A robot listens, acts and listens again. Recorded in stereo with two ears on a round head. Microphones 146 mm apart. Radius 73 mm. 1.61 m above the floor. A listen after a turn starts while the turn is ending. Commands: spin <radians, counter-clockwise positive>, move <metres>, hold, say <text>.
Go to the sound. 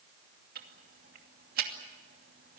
spin -1.13
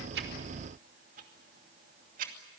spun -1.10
spin -0.96
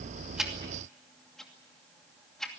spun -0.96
move 1.0
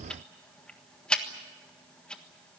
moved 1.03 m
move 1.0
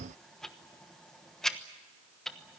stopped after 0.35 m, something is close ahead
say Arrived at the ticking, straight ahead.